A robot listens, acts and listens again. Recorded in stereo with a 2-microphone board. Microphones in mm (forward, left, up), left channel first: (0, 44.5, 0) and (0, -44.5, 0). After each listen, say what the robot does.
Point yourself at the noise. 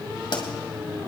Turn 65° left.
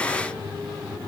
Keep listening.
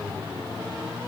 I heard a pop, but can't make it out now. It was about straight ahead or 50° left.